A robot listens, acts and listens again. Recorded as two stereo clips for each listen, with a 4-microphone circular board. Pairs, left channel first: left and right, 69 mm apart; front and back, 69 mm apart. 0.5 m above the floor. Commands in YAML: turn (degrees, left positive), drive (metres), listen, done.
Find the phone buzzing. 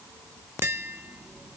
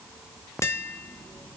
listen: true
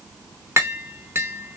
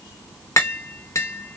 listen: true
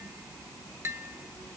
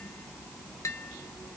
done: "I can't make out a phone buzzing, only tapping."